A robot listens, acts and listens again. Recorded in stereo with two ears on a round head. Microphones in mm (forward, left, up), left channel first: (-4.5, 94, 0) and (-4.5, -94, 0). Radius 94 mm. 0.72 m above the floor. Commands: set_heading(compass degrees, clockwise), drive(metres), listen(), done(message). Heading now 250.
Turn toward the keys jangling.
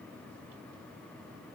listen()
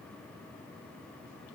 listen()
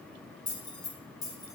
set_heading(230)
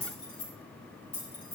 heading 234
set_heading(214)
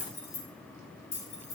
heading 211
set_heading(71)
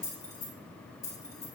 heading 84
set_heading(69)
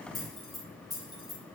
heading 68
done("Found it: keys jangling, straight ahead, 2 to 4 m away.")